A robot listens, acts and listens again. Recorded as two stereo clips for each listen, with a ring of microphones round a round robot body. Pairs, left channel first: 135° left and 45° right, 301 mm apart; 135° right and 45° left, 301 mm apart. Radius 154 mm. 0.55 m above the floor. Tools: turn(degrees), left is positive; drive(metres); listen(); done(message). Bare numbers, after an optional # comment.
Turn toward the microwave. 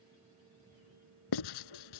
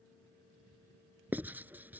listen()
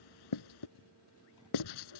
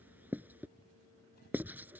listen()
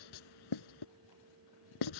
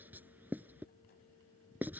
done("I can't make out a microwave to turn to.")